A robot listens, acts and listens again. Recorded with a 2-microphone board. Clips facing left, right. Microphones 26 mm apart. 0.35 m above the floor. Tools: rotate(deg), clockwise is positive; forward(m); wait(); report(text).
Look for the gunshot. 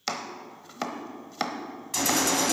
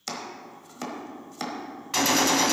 rotate(30)
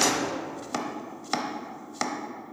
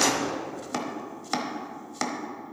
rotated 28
report("Facing the gunshot.")